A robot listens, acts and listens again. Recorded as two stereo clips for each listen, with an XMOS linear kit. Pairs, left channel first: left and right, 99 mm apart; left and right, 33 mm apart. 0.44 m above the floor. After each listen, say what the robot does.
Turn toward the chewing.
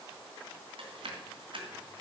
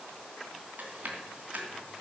Turn 70° right.
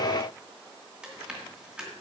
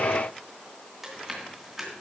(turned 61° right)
Turn 10° right.
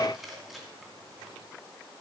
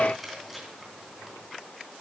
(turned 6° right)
Found it: chewing, straight ahead.